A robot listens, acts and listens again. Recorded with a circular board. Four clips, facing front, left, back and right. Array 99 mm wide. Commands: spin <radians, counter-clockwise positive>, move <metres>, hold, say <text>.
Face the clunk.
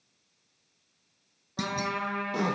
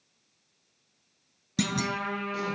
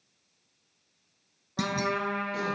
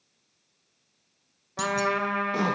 spin 1.66
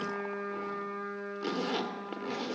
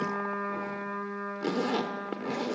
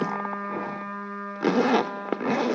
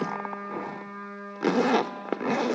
say I heard a clunk from this way, but can't make it out now.